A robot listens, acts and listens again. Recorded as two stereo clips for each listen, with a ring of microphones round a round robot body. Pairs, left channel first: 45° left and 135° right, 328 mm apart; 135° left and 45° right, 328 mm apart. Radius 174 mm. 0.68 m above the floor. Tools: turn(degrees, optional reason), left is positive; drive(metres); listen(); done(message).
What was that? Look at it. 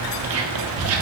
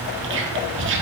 turn(degrees=-95, reason="The whispering: 95° right.")
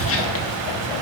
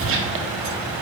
done("Found it: whispering, straight ahead.")